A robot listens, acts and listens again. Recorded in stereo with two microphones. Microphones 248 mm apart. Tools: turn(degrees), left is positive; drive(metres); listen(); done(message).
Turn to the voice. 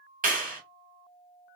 listen()
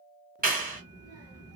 turn(degrees=-75)
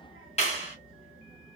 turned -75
done("Found it: a child speaking, straight ahead.")